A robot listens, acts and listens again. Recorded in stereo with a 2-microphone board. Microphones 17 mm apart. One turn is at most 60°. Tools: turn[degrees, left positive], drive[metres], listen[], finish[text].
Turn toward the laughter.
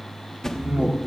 Action: turn[-60]
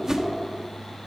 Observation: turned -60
Thought: Nothing new. It was at 30° right.
Action: turn[-30]
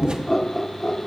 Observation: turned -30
Thought: The laughter is now 20° left.
Action: turn[20]
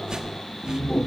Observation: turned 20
Thought: The laughter is now 20° left.
Action: turn[20]
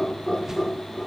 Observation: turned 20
Action: finish[Facing the laughter, 2 to 4 m away.]